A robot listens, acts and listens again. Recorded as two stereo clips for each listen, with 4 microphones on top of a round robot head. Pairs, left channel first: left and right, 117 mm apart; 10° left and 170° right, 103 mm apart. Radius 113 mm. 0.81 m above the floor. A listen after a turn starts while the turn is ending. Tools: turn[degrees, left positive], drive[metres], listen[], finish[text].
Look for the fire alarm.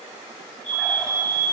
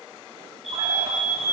Thought: The fire alarm: 100° left.
Action: turn[100]
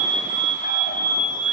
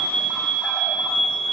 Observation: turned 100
Thought: The fire alarm is now 20° left.
Action: turn[20]
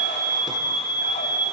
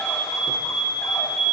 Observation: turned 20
Action: finish[Facing the fire alarm, over 4 m away.]